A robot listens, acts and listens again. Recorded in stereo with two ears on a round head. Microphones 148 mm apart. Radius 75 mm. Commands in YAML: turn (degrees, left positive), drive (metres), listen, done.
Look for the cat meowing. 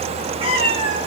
turn: -40
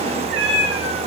turn: -95
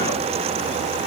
listen: true
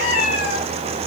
turn: 40
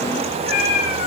turn: 40
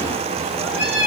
turn: -10
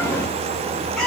done: "Found it: a cat meowing, straight ahead, over 4 m away."